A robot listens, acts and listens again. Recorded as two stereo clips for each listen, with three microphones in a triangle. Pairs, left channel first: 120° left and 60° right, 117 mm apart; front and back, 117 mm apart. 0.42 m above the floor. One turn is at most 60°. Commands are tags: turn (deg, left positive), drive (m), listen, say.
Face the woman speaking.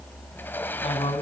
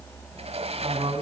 <turn deg="60"/>
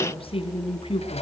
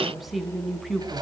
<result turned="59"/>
<turn deg="60"/>
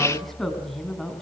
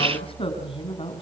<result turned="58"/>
<turn deg="35"/>
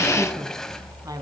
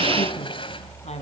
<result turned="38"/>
<listen/>
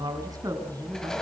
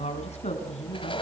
<say>Found it: a woman speaking, straight ahead, 2 to 4 m away.</say>